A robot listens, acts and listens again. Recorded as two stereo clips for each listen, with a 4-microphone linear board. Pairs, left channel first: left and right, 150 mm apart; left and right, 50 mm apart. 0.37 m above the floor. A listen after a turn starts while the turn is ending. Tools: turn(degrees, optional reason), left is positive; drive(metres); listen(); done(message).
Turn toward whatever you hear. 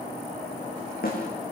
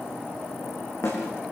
turn(degrees=90)
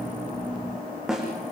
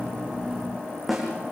done("Facing the snare drum.")